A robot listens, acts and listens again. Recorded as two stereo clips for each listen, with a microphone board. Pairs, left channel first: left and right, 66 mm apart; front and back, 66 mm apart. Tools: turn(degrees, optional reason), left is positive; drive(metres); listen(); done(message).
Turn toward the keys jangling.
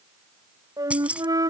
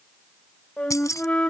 turn(degrees=-20, reason="The keys jangling: 20° right.")
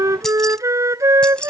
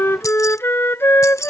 turn(degrees=20, reason="The keys jangling is now 20° left.")
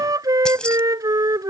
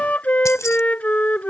listen()
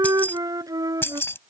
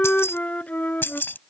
turn(degrees=50, reason="The keys jangling is now 50° left.")
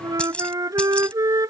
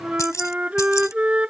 turn(degrees=20, reason="The keys jangling is now 20° left.")
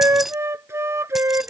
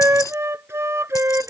done("Found it: keys jangling, straight ahead.")